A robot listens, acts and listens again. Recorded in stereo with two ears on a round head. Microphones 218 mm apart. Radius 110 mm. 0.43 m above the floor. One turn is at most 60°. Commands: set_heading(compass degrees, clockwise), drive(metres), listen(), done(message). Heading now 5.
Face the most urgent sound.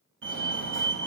set_heading(60)
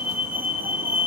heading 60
set_heading(70)
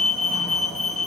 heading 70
done("Found it: a fire alarm, straight ahead.")